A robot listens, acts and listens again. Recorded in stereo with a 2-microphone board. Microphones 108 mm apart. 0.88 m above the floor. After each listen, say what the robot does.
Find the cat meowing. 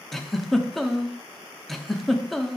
Keep listening.
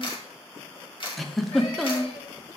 Keep listening.
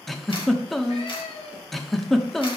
Turn 90° left.
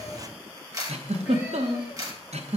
Keep listening.
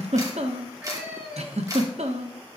Turn 10° right.
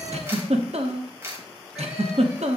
Keep listening.
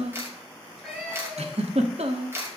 Found it: a cat meowing, straight ahead, over 4 m away.